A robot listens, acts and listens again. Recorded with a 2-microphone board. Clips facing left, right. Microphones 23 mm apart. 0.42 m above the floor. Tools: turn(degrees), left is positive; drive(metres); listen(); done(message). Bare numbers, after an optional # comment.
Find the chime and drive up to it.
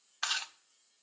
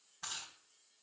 listen()
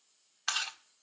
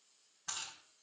listen()
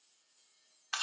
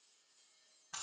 done("I can't make out a chime to turn to.")